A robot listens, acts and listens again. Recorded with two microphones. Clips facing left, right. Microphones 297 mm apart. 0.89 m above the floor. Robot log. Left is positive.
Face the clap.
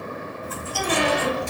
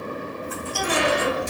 cmd idle
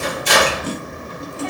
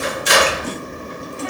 cmd idle
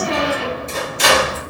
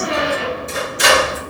end: I can't make out a clap, only a squeak and chewing.